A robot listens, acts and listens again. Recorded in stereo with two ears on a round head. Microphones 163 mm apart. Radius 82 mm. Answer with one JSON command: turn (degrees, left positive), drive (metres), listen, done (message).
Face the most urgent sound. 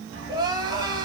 {"turn": -20}
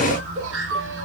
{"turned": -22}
{"turn": -135}
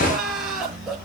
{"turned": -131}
{"done": "Found it: crying, straight ahead."}